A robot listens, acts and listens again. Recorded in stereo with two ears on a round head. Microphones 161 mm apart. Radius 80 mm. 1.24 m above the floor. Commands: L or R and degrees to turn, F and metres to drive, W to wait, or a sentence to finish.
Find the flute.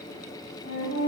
L20
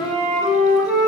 Found it: a flute, straight ahead, 1 to 2 m away.